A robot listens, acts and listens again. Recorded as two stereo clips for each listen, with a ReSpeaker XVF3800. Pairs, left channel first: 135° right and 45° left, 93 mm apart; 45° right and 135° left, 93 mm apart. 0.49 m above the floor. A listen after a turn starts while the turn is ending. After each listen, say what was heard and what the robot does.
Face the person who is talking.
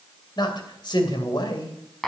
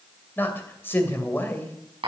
The man speaking: 110° right. Turn 110° right.
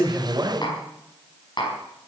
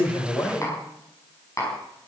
The man speaking is now 10° left. Turn 10° left.
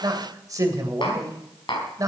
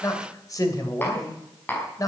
Facing the man speaking.